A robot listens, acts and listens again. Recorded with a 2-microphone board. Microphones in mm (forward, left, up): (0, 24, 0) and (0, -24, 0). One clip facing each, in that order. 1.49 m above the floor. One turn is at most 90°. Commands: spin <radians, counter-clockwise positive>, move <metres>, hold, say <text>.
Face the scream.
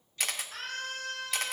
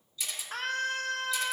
spin -1.22
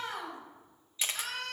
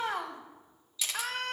spin -0.79
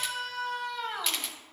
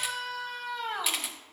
say Found it: a scream, straight ahead, 2 to 4 m away.